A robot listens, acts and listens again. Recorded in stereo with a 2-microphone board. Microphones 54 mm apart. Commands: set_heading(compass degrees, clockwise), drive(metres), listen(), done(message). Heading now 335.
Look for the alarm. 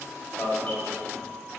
set_heading(305)
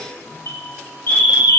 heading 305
set_heading(190)
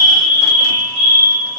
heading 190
set_heading(180)
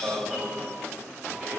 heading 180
done("Found it: an alarm, straight ahead, 2 to 4 m away.")